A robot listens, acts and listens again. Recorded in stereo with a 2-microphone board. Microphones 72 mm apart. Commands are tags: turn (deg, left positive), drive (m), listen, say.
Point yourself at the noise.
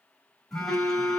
<turn deg="30"/>
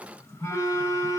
<turn deg="140"/>
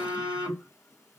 <turn deg="45"/>
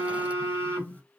<turn deg="25"/>
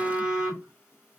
<turn deg="-20"/>
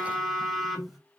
<say>Found it: a phone buzzing, straight ahead.</say>